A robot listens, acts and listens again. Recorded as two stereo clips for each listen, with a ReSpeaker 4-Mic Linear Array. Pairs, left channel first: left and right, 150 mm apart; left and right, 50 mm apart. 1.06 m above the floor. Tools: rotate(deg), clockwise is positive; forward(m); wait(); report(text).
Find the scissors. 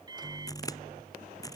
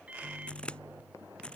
rotate(-25)
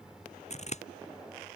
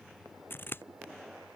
rotate(-130)
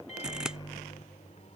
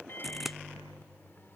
report("Facing the scissors.")